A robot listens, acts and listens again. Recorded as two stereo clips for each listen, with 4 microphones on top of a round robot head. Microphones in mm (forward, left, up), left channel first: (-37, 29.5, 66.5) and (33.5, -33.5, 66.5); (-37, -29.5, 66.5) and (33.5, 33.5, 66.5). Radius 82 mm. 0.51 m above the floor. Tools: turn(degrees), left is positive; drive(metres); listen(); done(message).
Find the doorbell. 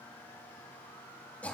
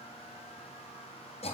listen()
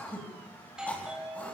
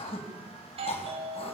turn(degrees=40)
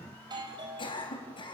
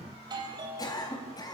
done("Found it: a doorbell, straight ahead.")